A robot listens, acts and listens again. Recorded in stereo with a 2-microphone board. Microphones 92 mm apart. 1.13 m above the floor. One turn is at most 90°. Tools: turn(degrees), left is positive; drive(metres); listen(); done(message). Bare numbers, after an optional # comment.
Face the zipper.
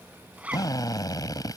turn(-30)
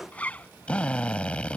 # So it is at 15° left.
turn(15)
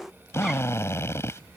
listen()
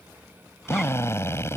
listen()
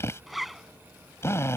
done("Facing the zipper.")